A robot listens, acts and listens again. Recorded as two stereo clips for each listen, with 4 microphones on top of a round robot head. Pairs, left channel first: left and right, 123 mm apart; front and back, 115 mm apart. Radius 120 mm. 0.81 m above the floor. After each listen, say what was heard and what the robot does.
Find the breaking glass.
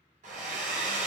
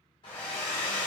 Keep listening.
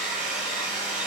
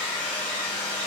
Keep listening.
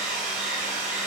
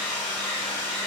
I can't make out breaking glass to turn to.